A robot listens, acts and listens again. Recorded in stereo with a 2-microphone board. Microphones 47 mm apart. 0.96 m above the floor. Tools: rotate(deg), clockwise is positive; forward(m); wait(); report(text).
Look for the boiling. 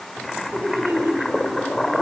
rotate(-30)
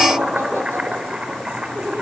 rotate(25)
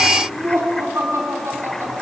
wait()
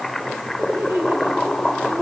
report("Found it: boiling, straight ahead.")